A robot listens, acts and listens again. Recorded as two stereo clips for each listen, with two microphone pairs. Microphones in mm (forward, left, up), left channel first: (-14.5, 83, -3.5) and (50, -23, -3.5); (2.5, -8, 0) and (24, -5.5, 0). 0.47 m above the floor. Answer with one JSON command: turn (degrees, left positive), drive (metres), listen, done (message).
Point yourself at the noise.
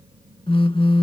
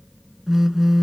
{"turn": 80}
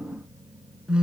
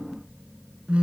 {"turn": 25}
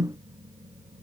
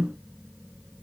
{"done": "Found it: a phone buzzing, straight ahead."}